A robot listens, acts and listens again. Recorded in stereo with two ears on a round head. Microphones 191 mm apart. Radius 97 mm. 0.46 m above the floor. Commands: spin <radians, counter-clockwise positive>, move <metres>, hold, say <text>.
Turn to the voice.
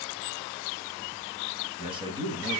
spin -0.44
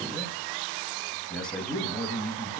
say Found it: a man speaking, straight ahead.